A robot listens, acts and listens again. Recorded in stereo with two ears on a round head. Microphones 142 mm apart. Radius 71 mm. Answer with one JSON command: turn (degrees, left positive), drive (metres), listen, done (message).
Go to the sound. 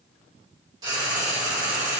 {"turn": -25}
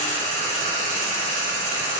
{"turn": -130}
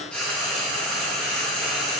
{"drive": 1.0}
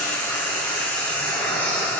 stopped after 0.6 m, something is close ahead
{"turn": 10}
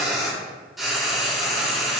{"done": "Something is in my way. I am facing the frying but have not reached it."}